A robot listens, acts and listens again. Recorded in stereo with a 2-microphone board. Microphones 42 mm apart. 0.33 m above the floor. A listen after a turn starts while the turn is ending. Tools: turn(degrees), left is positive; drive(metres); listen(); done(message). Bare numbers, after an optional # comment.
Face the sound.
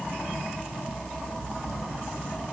listen()
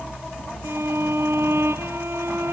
turn(-90)
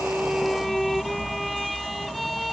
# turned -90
listen()
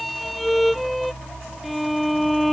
done("Facing the violin.")